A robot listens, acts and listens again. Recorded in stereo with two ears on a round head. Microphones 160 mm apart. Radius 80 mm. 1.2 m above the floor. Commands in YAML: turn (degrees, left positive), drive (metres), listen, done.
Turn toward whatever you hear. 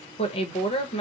turn: 35
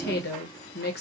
turn: 110
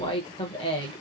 turn: 30
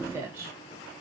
turn: -15
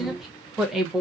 done: "Facing the woman speaking."